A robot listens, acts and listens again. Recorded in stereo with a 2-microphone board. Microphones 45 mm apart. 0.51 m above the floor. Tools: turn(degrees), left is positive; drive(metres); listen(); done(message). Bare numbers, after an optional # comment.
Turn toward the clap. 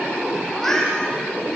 listen()
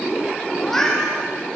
listen()
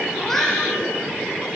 done("I can't make out a clap to turn to.")